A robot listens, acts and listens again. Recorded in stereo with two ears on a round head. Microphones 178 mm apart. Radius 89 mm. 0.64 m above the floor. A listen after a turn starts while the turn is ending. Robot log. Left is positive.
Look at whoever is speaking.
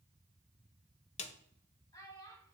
note: The child speaking: about 20° left or 160° left.
cmd yaw +20
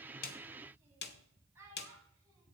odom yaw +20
note: So it is at 15° right.
cmd yaw -15
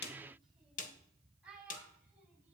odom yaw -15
end: Found it: a child speaking, straight ahead.